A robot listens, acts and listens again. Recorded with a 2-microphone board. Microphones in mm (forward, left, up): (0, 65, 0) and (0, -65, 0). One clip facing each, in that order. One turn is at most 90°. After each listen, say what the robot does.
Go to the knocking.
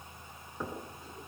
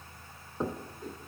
Turn 25° right.
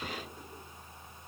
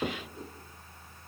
Turn 90° right.
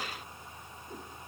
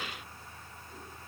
Turn 40° right.
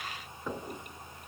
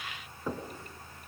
Turn 10° right.
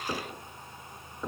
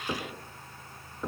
Drive 1.0 m forward.
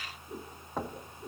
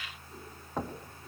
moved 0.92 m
Drive 1.0 m forward.
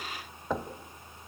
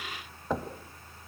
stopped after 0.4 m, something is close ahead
Arrived at the knocking, straight ahead.